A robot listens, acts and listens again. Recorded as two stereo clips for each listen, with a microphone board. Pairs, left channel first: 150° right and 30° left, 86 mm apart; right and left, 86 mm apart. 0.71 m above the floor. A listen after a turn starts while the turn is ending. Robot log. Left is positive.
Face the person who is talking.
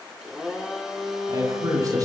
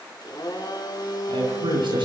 note: The man speaking: 75° left.
cmd yaw +75
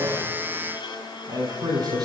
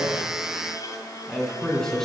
end: Found it: a man speaking, straight ahead, over 4 m away.